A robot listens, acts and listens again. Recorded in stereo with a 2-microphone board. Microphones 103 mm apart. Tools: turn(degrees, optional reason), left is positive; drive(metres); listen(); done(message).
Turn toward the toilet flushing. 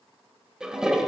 turn(degrees=-30)
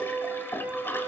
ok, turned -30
turn(degrees=20, reason="So it is at 20° left.")
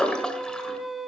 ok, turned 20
turn(degrees=10, reason="The toilet flushing is now 10° left.")
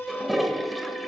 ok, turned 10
done("Found it: a toilet flushing, straight ahead.")